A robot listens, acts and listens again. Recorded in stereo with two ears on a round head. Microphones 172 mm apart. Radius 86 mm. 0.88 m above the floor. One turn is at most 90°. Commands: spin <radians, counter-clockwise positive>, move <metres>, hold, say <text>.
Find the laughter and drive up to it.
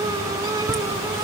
spin 0.52
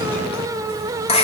spin 1.57
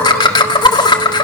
spin 0.44
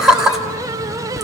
move 1.0
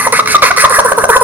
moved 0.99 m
spin -0.17
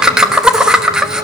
move 1.0
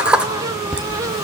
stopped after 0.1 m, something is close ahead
say Arrived at the laughter, straight ahead.